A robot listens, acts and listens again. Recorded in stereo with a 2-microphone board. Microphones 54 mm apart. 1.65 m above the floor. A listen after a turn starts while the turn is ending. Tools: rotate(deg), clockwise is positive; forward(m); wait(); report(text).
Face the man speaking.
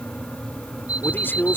rotate(-45)
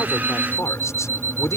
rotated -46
rotate(-95)
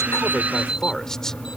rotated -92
wait()
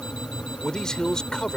rotate(-15)
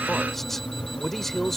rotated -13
wait()
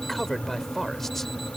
report("Facing the man speaking.")